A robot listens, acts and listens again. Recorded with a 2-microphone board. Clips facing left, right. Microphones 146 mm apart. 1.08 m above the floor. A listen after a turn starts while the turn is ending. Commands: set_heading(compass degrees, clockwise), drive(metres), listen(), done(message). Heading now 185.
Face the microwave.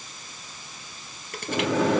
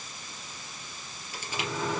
set_heading(110)
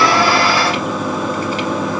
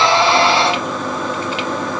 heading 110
done("Facing the microwave, 1 to 2 m away.")